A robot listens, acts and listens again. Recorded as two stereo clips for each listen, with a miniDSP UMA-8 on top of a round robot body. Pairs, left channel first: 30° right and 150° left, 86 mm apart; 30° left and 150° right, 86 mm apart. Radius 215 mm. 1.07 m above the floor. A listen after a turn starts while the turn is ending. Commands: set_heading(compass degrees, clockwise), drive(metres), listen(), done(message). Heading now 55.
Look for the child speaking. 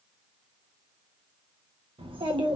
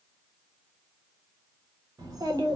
set_heading(250)
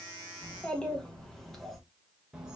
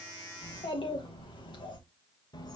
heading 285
set_heading(215)
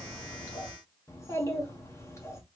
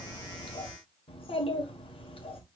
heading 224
set_heading(199)
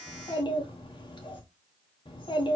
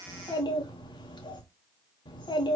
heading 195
done("Facing the child speaking, 1 to 2 m away.")